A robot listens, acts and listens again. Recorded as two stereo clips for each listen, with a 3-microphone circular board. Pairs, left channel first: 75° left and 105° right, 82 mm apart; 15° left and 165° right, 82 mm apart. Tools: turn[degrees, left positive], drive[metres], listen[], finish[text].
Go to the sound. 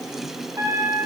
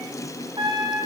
Thought: The trumpet: 155° right.
Action: turn[-155]
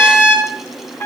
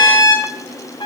Thought: The trumpet is now 10° left.
Action: turn[10]
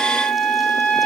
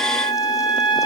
Action: drive[1.0]
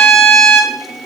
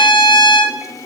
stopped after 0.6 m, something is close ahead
Action: finish[Blocked. The trumpet is further on, straight ahead.]